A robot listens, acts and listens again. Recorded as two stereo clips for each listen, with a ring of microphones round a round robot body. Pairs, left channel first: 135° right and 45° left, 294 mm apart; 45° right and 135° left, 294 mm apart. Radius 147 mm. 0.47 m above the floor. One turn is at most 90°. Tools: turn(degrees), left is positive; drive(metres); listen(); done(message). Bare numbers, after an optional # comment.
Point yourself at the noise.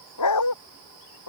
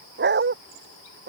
# The dog barking: 170° right.
turn(-90)
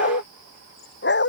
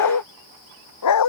# The dog barking is now 80° right.
turn(-80)
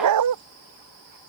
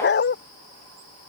# The dog barking is now 10° left.
turn(10)
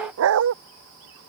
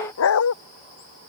done("Found it: a dog barking, straight ahead.")